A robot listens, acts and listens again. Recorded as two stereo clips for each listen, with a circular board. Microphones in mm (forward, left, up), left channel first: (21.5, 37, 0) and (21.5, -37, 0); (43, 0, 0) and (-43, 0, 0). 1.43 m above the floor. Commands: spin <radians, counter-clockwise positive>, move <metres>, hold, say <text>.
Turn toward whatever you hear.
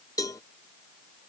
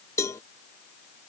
spin 0.96
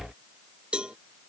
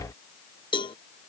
spin -0.26
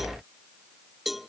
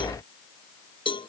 say Facing the cowbell.